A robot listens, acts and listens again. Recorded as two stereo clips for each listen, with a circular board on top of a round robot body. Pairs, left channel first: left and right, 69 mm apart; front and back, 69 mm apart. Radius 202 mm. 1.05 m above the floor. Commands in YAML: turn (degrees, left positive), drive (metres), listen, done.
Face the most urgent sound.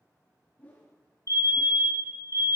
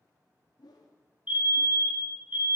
turn: 115
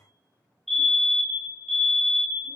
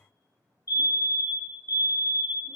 done: "Found it: a fire alarm, straight ahead."